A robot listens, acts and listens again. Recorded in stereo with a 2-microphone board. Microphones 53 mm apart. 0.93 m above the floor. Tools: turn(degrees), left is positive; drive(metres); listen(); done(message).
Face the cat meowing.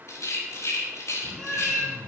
turn(degrees=30)
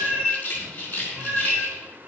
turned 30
turn(degrees=-25)
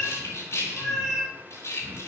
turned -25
done("Facing the cat meowing, over 4 m away.")